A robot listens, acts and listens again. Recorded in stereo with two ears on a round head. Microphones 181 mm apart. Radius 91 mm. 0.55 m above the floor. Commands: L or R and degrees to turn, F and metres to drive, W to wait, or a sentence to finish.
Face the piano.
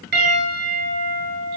R55
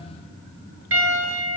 R70
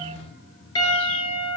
L20
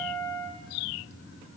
Facing the piano.